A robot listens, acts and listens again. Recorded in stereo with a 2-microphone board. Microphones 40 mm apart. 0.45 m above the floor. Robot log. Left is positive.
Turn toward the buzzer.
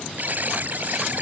note: The buzzer: about 45° right or 135° right.
cmd yaw -45
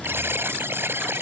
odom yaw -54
note: So it is at 80° right.
cmd yaw -80
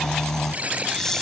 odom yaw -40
note: The buzzer is now 40° right.
cmd yaw -40
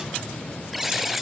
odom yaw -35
end: Facing the buzzer.